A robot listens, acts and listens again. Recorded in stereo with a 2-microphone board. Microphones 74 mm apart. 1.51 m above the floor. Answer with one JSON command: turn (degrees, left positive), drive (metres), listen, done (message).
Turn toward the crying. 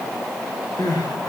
{"turn": 60}
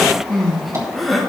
{"done": "Facing the crying."}